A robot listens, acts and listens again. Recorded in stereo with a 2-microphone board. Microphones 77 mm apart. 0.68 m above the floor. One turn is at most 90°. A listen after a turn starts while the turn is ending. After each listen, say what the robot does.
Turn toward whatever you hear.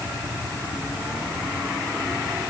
Keep listening.
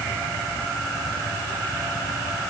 Keep listening.
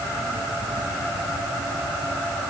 I can't make out anything to turn to.